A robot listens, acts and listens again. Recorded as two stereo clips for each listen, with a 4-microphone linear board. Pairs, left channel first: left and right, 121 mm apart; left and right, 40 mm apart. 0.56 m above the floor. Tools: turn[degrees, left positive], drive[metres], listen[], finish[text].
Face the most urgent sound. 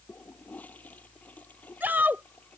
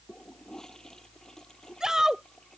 Thought: The shout: about 15° right or 165° right.
Action: turn[-15]
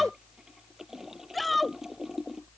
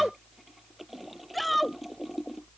Action: finish[Found it: a shout, straight ahead.]